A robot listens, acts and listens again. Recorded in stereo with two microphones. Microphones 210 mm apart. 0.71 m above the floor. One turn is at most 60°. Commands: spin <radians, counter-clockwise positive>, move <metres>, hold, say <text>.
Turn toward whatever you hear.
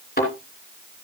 spin 0.79
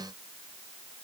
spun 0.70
hold
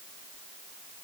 say I heard a thud, but can't make it out now. It was about 5° left or 95° left.